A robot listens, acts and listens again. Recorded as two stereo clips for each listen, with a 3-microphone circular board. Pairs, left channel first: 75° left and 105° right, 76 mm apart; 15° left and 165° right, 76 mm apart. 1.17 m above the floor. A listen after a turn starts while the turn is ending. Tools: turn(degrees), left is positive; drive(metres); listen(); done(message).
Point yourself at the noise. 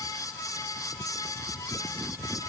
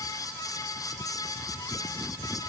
listen()
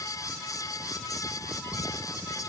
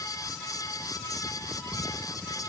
listen()
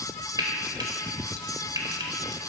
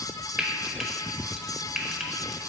turn(degrees=-85)
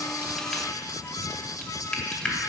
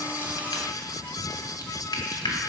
done("Found it: frying, straight ahead, 1 to 2 m away.")